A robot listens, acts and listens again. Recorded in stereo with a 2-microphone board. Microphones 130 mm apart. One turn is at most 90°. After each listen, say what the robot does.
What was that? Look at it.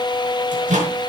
Turn 90° right.
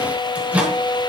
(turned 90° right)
Turn 10° right.
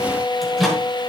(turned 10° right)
Found it: a microwave, straight ahead, over 4 m away.